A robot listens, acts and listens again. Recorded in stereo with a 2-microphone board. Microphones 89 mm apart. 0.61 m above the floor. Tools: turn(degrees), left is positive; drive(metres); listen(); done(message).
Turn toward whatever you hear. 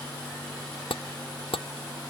turn(degrees=90)
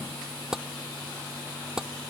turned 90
done("Found it: tapping, straight ahead.")